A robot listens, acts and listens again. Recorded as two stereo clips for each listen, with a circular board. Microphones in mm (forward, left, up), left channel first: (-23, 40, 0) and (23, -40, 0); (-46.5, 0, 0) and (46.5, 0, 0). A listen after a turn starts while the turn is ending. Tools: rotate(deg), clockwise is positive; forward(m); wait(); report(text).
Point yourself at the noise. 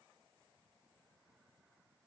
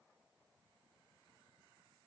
wait()
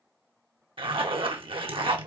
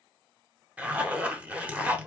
rotate(75)
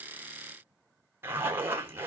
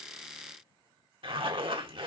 report("Found it: a zipper, straight ahead.")